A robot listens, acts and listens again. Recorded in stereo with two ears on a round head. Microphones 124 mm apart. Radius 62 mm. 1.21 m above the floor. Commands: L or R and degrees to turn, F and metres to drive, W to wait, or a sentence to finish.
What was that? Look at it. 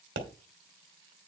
R90
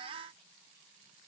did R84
I heard a pop from this way, but can't make it out now.